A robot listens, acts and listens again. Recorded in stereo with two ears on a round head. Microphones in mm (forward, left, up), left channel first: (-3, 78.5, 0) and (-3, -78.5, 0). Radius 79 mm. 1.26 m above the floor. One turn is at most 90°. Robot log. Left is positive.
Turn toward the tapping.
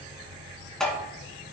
cmd yaw +30
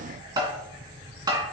note: So it is at 25° right.
cmd yaw -25
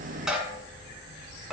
end: Found it: tapping, straight ahead.